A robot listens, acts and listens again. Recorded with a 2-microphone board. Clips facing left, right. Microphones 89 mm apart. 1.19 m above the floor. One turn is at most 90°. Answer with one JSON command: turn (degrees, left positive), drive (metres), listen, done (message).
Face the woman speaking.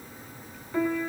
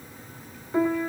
{"listen": true}
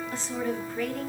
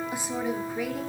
{"turn": -30}
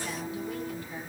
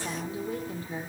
{"turn": -90}
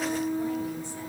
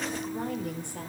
{"turn": -60}
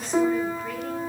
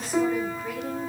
{"listen": true}
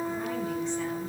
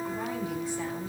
{"done": "Facing where the woman speaking came from. I can't hear it now."}